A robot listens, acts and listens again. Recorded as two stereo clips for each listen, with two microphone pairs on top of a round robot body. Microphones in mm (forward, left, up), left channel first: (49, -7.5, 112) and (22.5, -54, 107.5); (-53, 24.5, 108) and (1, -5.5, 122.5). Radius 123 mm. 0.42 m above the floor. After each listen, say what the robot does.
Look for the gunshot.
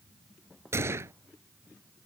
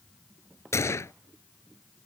Turn 165° right.
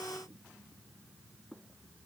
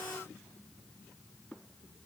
I heard a gunshot from this way, but can't make it out now.